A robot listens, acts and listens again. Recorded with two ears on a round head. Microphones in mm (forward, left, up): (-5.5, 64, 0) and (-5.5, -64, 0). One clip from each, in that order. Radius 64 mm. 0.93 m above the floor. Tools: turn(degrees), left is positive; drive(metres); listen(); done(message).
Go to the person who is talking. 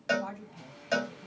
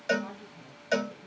turn(degrees=20)
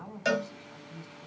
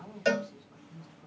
turn(degrees=140)
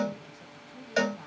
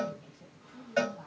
turn(degrees=35)
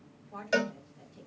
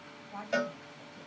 drive(metres=1.0)
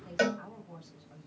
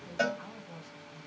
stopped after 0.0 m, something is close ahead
done("Blocked. The woman speaking is further on, straight ahead.")